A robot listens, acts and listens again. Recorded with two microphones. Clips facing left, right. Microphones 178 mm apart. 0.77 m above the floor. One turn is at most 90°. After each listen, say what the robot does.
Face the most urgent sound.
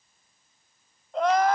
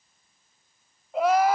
Turn 30° right.
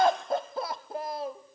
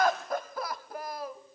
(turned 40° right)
Turn 30° left.
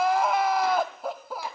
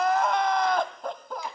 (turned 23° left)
Found it: crying, straight ahead, 1 to 2 m away.